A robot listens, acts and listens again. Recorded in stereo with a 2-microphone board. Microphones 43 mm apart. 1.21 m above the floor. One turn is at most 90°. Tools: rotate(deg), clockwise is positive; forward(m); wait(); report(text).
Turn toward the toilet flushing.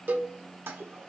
rotate(65)
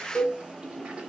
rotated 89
rotate(20)
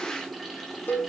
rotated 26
report("Facing the toilet flushing, 1 to 2 m away.")